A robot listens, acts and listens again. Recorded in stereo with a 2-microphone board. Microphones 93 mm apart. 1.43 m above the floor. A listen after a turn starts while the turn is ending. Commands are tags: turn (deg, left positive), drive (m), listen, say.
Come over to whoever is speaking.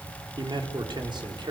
<turn deg="-60"/>
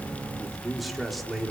<drive m="1.0"/>
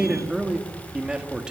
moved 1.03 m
<turn deg="-10"/>
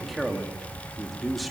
<drive m="1.0"/>
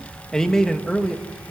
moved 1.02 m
<drive m="1.0"/>
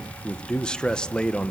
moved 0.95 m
<turn deg="10"/>
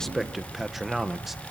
<drive m="1.0"/>
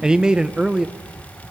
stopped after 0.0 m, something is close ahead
<turn deg="-10"/>
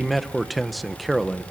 <say>I am next to the man speaking.</say>